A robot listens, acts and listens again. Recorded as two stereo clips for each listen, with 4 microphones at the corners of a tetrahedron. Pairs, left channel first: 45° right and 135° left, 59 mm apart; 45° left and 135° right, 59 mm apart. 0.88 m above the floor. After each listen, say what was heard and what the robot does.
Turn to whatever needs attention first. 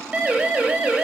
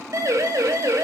The siren: 155° right. Turn 155° right.
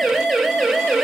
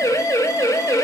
The siren is now 45° left. Turn 45° left.
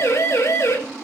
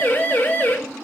The siren is now 10° right. Turn 10° right.
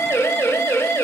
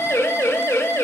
Found it: a siren, straight ahead, over 4 m away.